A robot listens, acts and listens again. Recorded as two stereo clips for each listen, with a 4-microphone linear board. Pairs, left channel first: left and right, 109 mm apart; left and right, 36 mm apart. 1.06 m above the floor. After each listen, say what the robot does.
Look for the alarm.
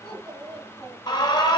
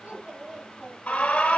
Turn 45° left.
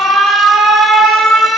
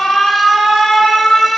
Found it: an alarm, straight ahead, 1 to 2 m away.